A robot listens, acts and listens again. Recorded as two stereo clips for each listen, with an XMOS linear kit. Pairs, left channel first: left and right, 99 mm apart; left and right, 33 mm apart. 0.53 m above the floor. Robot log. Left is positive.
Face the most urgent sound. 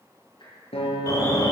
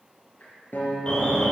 note: The alarm: about 35° left or 145° left.
cmd yaw +35
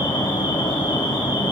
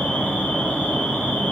note: So it is at 105° left.
cmd yaw +105
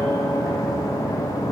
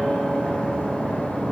note: The alarm is now 45° left.
cmd yaw +45
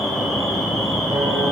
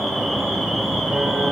end: Facing the alarm, 2 to 4 m away.